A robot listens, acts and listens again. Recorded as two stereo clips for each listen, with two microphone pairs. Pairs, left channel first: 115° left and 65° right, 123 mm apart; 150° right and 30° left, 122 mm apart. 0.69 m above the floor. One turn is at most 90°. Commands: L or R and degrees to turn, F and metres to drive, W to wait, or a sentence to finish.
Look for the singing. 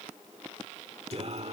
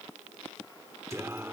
R40
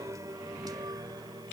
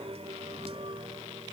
R10
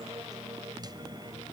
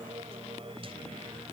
R10
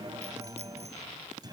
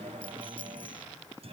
R10
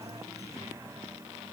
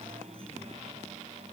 Found it: singing, straight ahead.